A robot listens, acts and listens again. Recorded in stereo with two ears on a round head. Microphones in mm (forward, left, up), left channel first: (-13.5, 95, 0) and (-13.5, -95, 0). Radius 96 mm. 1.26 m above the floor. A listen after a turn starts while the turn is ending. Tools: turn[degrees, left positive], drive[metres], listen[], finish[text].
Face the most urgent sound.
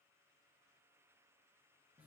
Action: listen[]
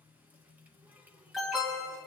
Action: turn[30]
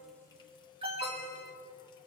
Thought: So it is at 30° right.
Action: turn[-30]
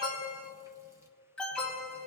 Action: finish[Found it: an alarm, straight ahead.]